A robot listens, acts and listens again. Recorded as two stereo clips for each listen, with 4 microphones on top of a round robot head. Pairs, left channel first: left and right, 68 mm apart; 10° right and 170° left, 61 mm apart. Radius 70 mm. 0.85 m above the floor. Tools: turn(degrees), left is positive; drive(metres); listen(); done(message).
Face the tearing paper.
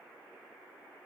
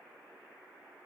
listen()
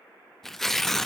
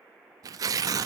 turn(degrees=175)
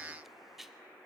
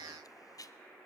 done("Facing the tearing paper, 1 to 2 m away.")